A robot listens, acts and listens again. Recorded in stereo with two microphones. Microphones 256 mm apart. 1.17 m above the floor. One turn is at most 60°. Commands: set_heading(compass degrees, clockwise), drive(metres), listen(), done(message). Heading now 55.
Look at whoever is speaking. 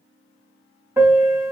listen()
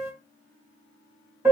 listen()
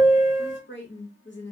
set_heading(10)
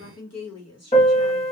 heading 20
set_heading(320)
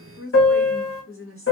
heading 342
set_heading(282)
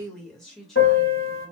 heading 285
done("Facing the woman speaking.")